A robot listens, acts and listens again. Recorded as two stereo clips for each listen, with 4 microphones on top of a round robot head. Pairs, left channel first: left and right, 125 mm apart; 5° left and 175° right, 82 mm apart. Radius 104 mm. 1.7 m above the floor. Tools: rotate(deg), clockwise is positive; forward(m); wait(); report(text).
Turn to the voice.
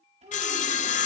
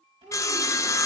rotate(135)
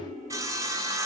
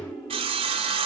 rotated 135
report("Found it: a child speaking, straight ahead.")